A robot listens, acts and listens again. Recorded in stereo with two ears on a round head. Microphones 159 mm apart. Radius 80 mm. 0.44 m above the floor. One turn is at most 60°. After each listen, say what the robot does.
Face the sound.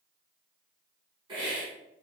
Turn 30° right.
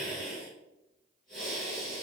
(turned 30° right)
Found it: a hiss, straight ahead, 2 to 4 m away.